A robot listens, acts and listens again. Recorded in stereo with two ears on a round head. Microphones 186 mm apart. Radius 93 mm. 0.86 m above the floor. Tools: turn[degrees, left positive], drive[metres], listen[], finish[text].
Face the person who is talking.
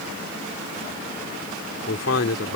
Thought: The man speaking: about 75° left or 105° left.
Action: turn[75]
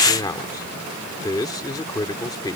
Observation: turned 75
Thought: So it is at 20° left.
Action: turn[20]
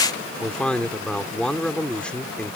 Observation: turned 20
Action: finish[Facing the man speaking.]